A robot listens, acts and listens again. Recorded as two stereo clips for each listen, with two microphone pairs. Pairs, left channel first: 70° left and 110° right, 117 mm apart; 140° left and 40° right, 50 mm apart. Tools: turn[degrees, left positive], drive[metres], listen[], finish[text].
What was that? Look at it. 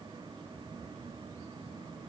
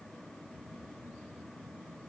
Action: listen[]
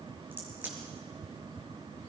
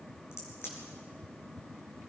Thought: The crack: 175° left.
Action: turn[175]
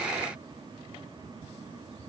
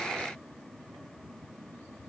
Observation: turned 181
Action: finish[Facing where the crack came from. I can't hear it now.]